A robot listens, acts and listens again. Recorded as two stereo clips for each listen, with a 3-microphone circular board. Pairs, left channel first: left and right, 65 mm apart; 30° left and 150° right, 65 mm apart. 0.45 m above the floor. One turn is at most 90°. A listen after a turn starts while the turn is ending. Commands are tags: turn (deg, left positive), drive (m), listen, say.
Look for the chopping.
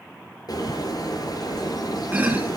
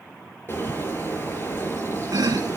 <turn deg="-90"/>
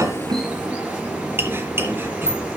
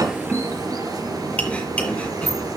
<turn deg="-40"/>
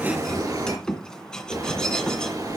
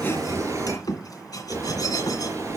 <turn deg="10"/>
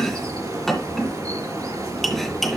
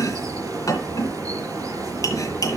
<say>Found it: chopping, straight ahead.</say>